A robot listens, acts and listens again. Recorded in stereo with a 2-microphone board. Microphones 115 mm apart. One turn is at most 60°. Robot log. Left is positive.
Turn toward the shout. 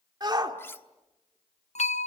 note: The shout: about 35° right or 145° right.
cmd yaw -35
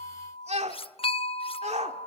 note: So it is at 110° right.
cmd yaw -60
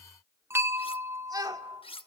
note: The shout is now 35° right.
cmd yaw -35
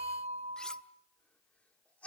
note: The shout is now 10° left.
cmd yaw +10
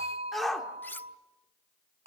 end: Facing the shout.